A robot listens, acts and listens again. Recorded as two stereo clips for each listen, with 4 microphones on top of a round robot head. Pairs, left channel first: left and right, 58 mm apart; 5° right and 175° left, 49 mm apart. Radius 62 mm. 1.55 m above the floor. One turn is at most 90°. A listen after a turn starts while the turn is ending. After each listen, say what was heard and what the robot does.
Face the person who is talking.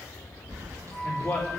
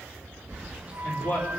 The man speaking: 20° left. Turn 20° left.
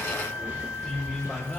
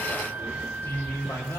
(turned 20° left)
Found it: a man speaking, straight ahead, over 4 m away.